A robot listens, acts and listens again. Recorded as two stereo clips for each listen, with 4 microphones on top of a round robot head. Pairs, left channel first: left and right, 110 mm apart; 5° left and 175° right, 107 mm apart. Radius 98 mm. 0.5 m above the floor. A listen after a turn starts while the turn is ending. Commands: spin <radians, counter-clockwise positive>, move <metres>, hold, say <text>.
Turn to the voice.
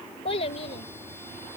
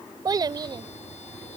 spin 2.36
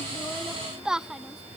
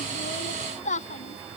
say Found it: a child speaking, straight ahead.